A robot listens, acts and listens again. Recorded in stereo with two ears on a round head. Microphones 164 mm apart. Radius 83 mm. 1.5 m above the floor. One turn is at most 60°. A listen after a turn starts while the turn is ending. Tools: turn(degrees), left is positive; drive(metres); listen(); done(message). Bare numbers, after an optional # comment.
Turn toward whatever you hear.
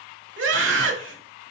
turn(-60)
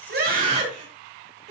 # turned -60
# So it is at 40° right.
turn(-40)
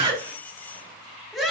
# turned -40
done("Found it: a scream, straight ahead, 2 to 4 m away.")